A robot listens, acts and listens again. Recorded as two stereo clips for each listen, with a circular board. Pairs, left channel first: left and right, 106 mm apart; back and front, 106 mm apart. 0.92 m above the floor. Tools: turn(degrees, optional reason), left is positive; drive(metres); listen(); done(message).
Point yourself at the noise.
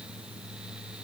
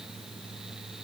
listen()
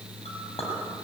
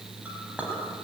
turn(degrees=75, reason="The clink: 75° left.")
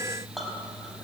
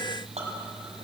done("Found it: a clink, straight ahead.")